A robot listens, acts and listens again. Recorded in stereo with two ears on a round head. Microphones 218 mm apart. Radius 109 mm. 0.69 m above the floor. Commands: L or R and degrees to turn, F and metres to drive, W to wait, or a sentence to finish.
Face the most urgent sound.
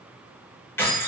W
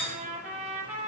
W
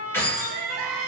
R60
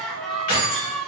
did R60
Facing the crying.